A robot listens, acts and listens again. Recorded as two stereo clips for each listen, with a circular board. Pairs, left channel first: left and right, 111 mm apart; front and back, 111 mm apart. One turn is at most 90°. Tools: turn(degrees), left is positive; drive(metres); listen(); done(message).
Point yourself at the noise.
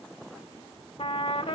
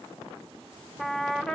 turn(degrees=85)
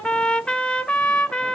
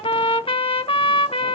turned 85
turn(degrees=10)
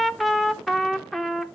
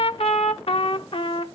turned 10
done("Facing the trumpet, under 1 m away.")